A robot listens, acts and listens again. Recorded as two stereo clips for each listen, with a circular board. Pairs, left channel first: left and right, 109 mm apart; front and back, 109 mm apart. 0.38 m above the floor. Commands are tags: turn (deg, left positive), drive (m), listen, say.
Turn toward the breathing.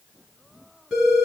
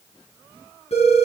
<listen/>
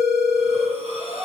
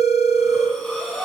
<turn deg="-90"/>
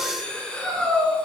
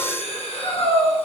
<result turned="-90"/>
<turn deg="10"/>
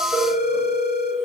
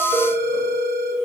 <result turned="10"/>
<listen/>
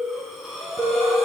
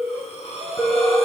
<say>Found it: breathing, straight ahead.</say>